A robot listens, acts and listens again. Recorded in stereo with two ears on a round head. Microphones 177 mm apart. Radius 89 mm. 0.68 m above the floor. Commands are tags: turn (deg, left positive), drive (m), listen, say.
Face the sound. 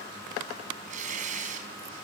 <turn deg="-40"/>
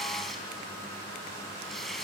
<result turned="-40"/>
<say>Facing the tearing paper, over 4 m away.</say>